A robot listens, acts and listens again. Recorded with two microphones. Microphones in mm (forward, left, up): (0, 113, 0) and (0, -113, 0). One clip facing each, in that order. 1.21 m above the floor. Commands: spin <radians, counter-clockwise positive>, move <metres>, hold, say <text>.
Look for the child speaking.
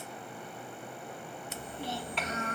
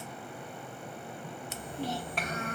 spin -0.87
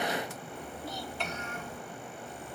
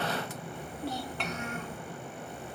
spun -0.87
spin -1.31
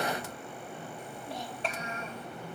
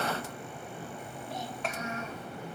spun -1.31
spin 0.52
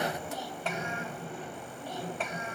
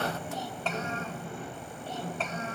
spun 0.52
spin 0.17
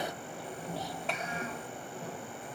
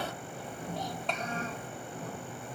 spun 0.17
say Facing the child speaking.